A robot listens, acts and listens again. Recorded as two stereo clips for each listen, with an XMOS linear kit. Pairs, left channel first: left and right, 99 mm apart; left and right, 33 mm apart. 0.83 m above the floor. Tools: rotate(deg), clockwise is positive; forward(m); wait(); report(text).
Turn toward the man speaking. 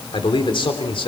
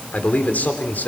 rotate(-65)
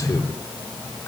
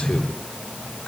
rotate(-30)
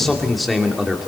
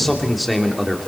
report("Facing the man speaking.")